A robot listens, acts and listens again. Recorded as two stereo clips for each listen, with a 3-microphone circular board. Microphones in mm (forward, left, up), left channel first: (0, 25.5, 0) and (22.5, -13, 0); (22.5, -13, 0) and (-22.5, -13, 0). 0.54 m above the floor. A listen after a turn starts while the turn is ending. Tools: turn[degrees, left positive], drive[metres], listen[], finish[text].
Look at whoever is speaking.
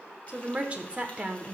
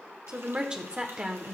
Thought: The woman speaking: 115° right.
Action: turn[-115]
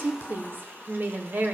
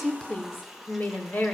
Thought: The woman speaking is now 30° right.
Action: turn[-30]
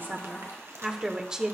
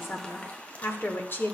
Thought: The woman speaking is now 10° left.
Action: turn[10]
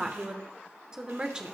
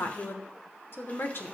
Action: finish[Found it: a woman speaking, straight ahead, 1 to 2 m away.]